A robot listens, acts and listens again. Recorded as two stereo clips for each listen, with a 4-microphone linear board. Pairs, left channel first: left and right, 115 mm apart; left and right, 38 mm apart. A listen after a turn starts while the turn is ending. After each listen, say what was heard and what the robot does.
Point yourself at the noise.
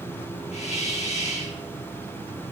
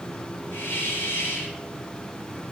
Turn 90° left.
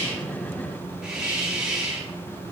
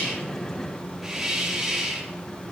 So it is at 10° right. Turn 10° right.
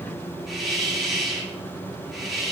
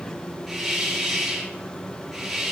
Found it: a hiss, straight ahead, 2 to 4 m away.